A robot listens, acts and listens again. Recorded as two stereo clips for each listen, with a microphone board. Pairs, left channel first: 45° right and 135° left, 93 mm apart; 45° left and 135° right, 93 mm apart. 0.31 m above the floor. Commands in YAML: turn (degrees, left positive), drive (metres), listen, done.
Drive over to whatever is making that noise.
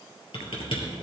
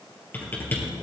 turn: -20
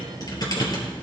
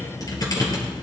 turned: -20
drive: 1.0
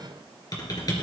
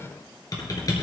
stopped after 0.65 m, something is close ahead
done: "Something is in my way. I am facing the typing on a keyboard but have not reached it."